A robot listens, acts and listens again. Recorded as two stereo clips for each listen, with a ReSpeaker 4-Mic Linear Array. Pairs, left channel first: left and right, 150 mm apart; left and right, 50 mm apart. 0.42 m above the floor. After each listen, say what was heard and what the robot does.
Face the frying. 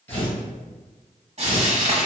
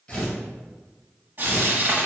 The frying: about 45° right or 135° right. Turn 45° right.
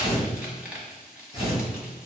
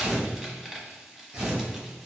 Keep listening.
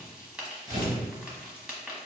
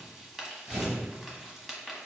Found it: frying, straight ahead.